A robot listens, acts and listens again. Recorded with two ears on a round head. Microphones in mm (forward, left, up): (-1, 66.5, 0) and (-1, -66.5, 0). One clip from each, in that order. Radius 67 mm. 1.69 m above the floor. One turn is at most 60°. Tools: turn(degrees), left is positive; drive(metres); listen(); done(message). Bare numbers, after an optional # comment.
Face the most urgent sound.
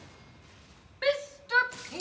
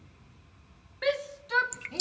turn(30)
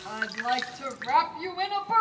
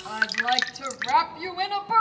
# So it is at 15° right.
turn(-15)
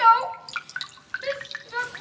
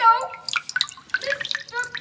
done("Found it: a shout, straight ahead, 1 to 2 m away.")